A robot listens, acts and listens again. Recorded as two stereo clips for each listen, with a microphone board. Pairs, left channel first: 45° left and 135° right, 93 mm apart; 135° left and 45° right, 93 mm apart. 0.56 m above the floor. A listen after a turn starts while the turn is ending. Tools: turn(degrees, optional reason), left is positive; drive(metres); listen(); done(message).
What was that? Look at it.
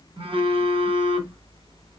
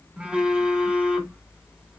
turn(degrees=-125, reason="The phone buzzing: 125° right.")
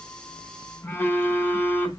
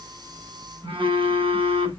turn(degrees=-20, reason="The phone buzzing is now 20° right.")
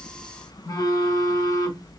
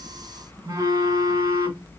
done("Facing the phone buzzing.")